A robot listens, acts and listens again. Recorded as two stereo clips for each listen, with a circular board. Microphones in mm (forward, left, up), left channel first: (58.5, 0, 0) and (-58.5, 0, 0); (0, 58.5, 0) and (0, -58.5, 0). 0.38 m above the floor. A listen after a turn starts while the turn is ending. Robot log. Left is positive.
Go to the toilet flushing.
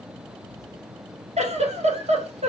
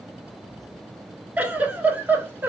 cmd idle
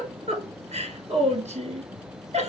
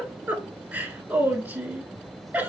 cmd idle
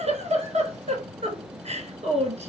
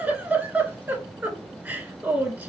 end: I can't make out a toilet flushing to turn to.